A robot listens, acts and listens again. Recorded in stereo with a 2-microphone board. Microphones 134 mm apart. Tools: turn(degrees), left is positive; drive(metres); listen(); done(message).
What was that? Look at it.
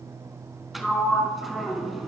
turn(degrees=30)
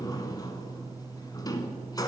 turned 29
turn(degrees=150)
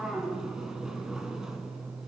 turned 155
done("Facing the sliding door.")